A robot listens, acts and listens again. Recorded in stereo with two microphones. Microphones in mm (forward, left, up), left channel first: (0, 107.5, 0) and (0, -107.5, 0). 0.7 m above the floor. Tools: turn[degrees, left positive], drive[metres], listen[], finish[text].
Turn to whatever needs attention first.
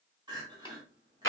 Thought: The crying: about 20° right or 160° right.
Action: turn[-20]
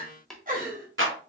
Thought: So it is at 135° right.
Action: turn[-135]
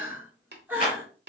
Thought: The crying is now 10° right.
Action: turn[-10]
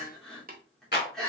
Action: finish[Facing the crying.]